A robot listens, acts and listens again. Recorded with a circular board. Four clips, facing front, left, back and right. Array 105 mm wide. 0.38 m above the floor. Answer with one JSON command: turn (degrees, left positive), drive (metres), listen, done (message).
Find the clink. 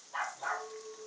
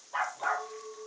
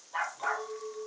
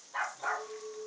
{"turn": 135}
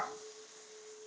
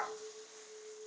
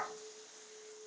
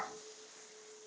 {"turn": 40}
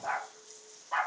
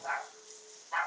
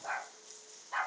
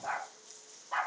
{"listen": true}
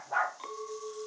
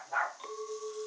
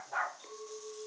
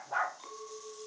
{"turn": 15}
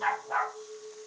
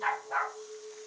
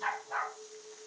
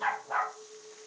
{"done": "Found it: a clink, straight ahead, 1 to 2 m away."}